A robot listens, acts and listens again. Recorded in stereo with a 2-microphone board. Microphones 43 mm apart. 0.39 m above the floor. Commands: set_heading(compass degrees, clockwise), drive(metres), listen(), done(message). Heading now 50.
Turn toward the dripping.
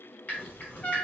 set_heading(5)
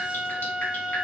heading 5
listen()
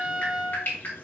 set_heading(285)
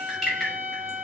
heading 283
done("Found it: dripping, straight ahead.")